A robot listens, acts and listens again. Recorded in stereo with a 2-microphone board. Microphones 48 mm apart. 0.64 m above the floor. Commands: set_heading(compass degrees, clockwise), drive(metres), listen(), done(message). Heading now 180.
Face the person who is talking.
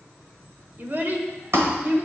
set_heading(225)
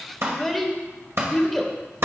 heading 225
done("Found it: a child speaking, straight ahead, 1 to 2 m away.")